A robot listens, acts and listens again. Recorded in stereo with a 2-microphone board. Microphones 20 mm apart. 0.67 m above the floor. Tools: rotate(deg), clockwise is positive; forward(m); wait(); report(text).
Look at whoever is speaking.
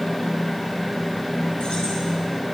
wait()
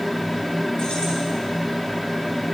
wait()
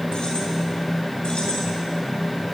report("I can't make out anyone speaking.")